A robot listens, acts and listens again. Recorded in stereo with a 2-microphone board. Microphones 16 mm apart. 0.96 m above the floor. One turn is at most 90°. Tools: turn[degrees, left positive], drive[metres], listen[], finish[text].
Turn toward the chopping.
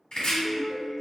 Action: turn[90]
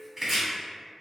Thought: So it is at 15° right.
Action: turn[-15]
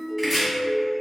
Action: finish[Found it: chopping, straight ahead.]